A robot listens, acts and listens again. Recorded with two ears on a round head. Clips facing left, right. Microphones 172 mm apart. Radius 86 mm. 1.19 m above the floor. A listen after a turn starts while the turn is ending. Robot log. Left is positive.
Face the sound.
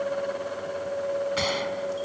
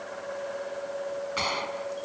cmd yaw +30
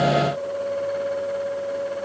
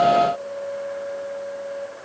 cmd idle
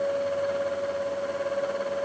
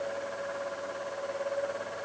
end: I heard a gunshot, but can't make it out now. It was about 20° right or 140° left.